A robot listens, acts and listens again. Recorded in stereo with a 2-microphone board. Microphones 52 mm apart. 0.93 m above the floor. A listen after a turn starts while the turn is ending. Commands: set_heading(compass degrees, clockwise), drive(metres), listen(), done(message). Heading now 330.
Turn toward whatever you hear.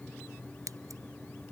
set_heading(60)
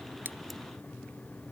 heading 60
listen()
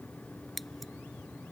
done("Facing the scissors.")